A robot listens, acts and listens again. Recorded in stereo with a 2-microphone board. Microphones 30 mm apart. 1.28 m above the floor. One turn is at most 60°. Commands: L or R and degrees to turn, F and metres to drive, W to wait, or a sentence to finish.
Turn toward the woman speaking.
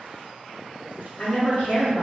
L55
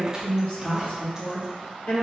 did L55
L60
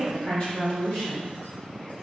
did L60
L40
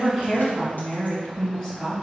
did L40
L15
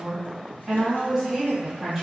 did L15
Facing the woman speaking.